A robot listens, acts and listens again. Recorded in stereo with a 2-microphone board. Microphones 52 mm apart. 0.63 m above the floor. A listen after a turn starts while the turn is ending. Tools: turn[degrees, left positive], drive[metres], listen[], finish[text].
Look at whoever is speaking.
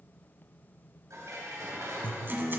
Action: listen[]
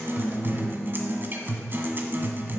Action: listen[]
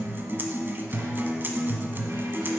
Action: finish[I can't make out anyone speaking, only dishes clattering and a guitar.]